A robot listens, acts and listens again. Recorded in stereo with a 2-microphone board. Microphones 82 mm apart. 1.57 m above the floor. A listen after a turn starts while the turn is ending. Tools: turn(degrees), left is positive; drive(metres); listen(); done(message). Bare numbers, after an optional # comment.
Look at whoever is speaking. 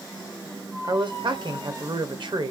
# The man speaking: about 75° right or 105° right.
turn(-75)
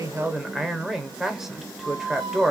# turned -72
done("Facing the man speaking, 1 to 2 m away.")